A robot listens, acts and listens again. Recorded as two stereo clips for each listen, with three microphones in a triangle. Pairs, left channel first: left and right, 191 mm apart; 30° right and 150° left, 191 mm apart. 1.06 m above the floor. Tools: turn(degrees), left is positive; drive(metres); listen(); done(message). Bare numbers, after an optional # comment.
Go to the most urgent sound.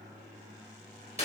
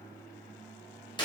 listen()
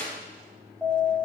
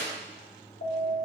drive(1.0)
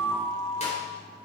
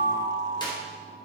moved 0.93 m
# The alarm is now 15° right.
turn(-15)
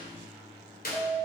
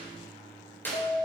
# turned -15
drive(1.0)
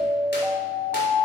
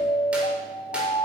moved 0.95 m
drive(1.0)
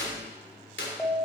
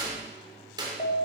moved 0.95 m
drive(1.0)
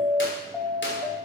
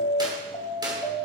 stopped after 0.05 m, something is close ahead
done("Arrived at the alarm, straight ahead.")